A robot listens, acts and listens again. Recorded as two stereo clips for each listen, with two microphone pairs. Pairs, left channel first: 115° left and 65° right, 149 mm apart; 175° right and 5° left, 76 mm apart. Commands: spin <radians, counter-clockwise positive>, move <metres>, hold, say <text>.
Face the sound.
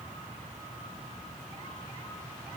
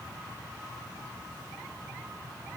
hold
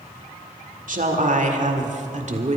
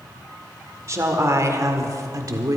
spin -0.52
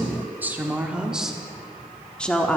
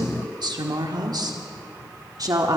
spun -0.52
spin 0.52
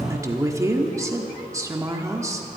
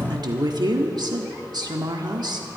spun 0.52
say Found it: a woman speaking, straight ahead.